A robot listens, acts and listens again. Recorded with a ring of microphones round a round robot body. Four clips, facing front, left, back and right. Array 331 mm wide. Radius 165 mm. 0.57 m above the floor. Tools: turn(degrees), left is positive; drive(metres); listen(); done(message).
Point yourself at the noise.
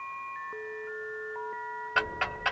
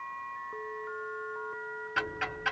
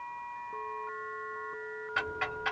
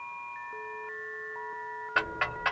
turn(degrees=-50)
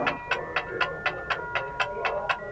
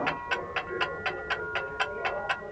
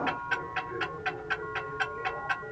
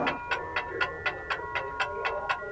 done("Found it: ticking, straight ahead.")